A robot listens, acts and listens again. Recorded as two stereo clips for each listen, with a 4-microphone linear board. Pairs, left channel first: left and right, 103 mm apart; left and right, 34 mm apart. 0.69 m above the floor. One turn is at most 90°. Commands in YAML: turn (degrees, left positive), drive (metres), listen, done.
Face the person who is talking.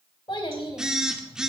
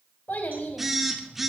turn: 60
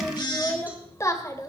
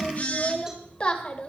turn: 40
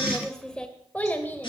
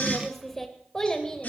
turn: 20
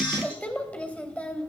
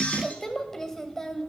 turn: 15
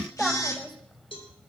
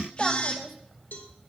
done: "Facing the child speaking."